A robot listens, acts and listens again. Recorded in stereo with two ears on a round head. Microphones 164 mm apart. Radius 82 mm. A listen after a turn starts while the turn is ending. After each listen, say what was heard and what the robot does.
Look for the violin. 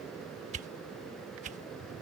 Keep listening.
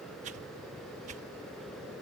Keep listening.
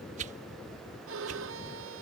Turn 90° right.
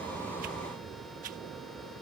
Keep listening.
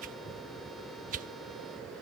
Keep listening.
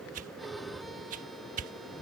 Facing the violin.